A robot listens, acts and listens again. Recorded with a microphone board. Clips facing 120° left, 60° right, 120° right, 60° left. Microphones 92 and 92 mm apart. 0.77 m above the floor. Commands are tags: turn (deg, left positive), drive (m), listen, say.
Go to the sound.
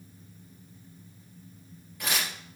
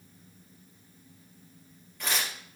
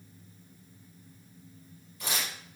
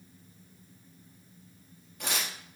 <turn deg="35"/>
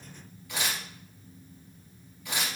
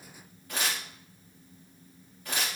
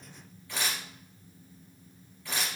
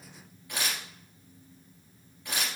<turn deg="-10"/>
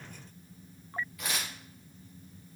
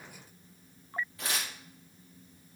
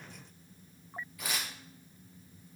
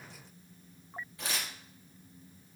<drive m="1.0"/>
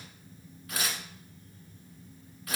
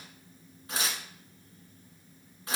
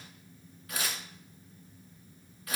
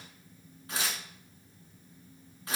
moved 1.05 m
<drive m="1.0"/>
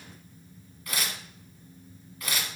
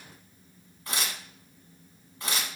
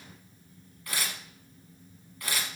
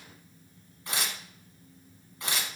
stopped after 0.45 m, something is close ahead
<say>Arrived at the tearing paper, straight ahead.</say>